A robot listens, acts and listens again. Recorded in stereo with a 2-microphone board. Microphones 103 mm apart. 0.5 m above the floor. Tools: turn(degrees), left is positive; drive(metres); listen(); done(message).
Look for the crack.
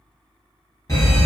listen()
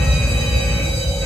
listen()
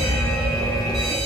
turn(degrees=60)
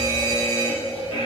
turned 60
listen()
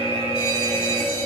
done("I heard a crack, but can't make it out now. It was about straight ahead or 60° left.")